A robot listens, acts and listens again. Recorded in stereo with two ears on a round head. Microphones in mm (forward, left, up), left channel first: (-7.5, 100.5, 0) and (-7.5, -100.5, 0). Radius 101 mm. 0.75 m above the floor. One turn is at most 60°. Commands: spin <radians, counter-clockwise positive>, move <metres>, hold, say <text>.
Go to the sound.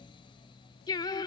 spin 0.35
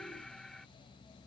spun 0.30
hold
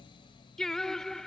move 1.0
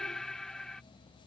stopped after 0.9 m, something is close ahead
say I am next to the singing.